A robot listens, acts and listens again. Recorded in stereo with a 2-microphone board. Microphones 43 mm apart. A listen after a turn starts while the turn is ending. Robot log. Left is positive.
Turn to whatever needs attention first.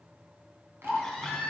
cmd yaw +30
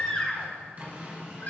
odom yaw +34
note: So it is at 140° left.
cmd yaw +140
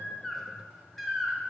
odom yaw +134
end: Facing the baby crying.